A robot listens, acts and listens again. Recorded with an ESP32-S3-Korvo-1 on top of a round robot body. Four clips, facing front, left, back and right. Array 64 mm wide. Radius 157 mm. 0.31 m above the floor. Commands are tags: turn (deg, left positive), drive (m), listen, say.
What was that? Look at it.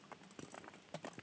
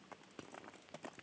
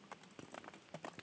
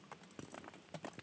<listen/>
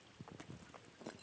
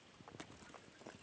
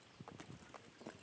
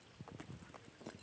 <listen/>
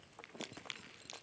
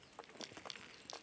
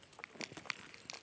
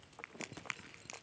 <turn deg="-130"/>
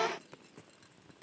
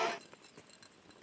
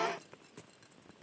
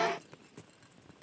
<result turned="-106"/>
<turn deg="-25"/>
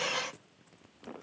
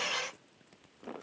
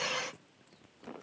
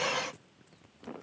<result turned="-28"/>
<say>I heard a crack from this way, but can't make it out now.</say>